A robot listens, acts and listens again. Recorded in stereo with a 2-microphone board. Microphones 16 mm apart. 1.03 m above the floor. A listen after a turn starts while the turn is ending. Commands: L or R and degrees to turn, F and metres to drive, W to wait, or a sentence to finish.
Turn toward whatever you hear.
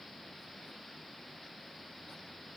W
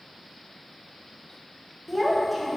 L30
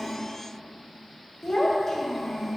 L150
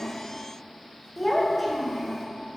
Facing the child speaking, 1 to 2 m away.